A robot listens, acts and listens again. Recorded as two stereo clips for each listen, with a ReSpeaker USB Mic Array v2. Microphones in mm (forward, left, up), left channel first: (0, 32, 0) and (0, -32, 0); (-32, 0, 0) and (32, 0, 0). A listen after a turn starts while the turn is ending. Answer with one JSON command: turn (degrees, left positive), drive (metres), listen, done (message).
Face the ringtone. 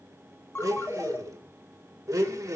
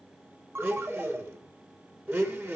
{"turn": 45}
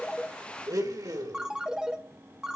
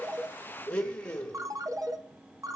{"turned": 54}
{"turn": -10}
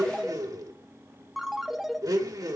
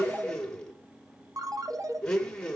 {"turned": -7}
{"done": "Facing the ringtone, 1 to 2 m away."}